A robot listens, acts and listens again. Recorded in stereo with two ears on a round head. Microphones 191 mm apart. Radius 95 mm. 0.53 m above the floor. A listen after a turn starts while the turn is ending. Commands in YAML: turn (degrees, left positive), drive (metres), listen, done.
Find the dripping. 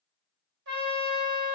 listen: true
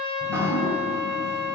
turn: -30
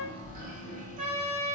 turn: -140
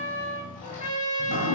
turn: 40
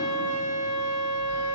listen: true
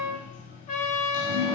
turn: 40
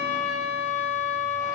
listen: true
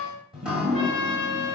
done: "Facing the dripping."